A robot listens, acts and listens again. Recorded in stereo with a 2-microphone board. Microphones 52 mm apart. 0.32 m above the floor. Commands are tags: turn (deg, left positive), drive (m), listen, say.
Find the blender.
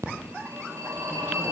<listen/>
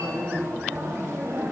<listen/>
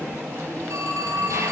<say>I can't make out a blender, only a phone ringing.</say>